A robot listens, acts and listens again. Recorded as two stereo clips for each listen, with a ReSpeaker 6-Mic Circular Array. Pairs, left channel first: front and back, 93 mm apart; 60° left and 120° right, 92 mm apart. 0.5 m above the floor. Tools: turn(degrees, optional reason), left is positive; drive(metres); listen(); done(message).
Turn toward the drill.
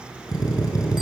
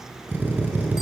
turn(degrees=-50, reason="The drill: 50° right.")
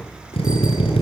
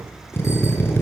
done("Facing the drill, over 4 m away.")